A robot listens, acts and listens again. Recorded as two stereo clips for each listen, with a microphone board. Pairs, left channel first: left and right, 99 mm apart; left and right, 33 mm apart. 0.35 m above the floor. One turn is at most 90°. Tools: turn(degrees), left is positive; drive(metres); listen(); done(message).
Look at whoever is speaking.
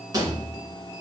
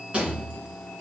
listen()
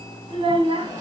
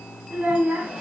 turn(degrees=-70)
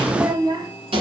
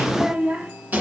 turn(degrees=-50)
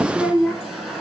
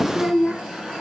done("Found it: a child speaking, straight ahead.")